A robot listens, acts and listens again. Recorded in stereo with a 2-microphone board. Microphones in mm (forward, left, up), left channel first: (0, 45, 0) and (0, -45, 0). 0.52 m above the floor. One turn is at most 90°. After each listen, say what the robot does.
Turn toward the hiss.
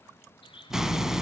Turn 30° right.
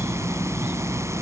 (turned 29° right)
Turn 90° right.
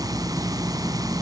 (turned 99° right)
Turn 50° right.
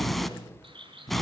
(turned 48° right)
Found it: a hiss, straight ahead, 1 to 2 m away.